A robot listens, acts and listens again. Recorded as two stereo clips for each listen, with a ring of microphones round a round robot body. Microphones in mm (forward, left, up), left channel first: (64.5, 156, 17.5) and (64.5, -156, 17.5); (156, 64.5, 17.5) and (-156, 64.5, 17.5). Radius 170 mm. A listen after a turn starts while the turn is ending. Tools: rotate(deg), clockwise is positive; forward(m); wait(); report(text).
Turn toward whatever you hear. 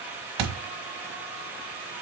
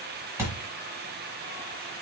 rotate(95)
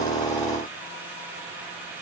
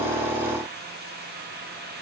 report("I heard a thud from this way, but can't make it out now.")